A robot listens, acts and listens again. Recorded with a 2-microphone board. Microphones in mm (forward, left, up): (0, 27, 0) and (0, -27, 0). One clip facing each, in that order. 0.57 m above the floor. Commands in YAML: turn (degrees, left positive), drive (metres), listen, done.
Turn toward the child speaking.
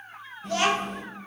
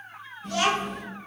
turn: 60
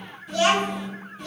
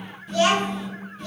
turn: 10
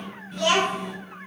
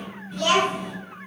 done: "Found it: a child speaking, straight ahead, 2 to 4 m away."